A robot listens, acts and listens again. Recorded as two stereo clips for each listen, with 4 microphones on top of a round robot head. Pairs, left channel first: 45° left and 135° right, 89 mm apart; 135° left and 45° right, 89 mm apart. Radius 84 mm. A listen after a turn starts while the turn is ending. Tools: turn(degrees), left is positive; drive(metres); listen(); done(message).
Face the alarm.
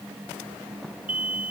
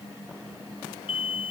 turn(degrees=150)
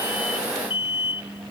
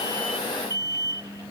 turn(degrees=10)
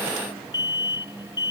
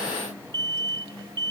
done("Facing the alarm.")